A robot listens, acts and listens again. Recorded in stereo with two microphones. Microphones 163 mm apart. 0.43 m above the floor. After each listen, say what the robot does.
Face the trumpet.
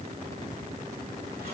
Keep listening.
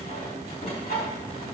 Keep listening.
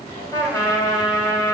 Turn 20° left.
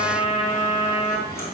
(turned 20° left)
Turn 140° left.
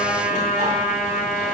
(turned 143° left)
Facing the trumpet, 1 to 2 m away.